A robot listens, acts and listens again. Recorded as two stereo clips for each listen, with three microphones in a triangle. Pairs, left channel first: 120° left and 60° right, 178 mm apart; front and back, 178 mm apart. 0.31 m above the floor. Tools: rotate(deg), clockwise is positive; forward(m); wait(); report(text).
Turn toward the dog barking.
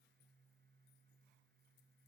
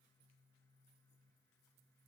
wait()
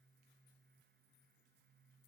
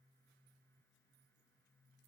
wait()
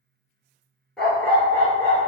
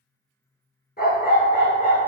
rotate(-45)
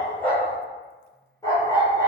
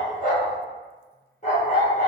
rotate(-50)
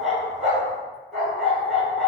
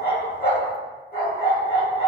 rotate(-30)
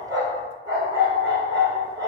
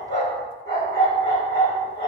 report("Facing the dog barking, 1 to 2 m away.")